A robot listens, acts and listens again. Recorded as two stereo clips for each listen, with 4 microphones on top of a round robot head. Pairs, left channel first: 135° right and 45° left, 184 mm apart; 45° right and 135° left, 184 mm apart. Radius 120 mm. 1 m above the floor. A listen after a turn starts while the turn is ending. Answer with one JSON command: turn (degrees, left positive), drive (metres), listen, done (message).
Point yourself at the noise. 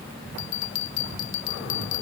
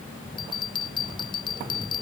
{"turn": -115}
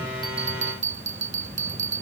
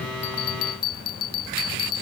{"done": "Found it: a bell, straight ahead."}